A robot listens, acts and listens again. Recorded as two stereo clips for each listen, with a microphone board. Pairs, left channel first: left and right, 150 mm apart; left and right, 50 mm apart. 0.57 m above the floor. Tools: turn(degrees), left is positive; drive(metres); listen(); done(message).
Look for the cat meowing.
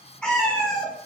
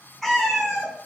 turn(degrees=30)
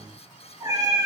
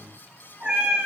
turn(degrees=-20)
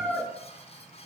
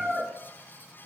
done("Found it: a cat meowing, straight ahead.")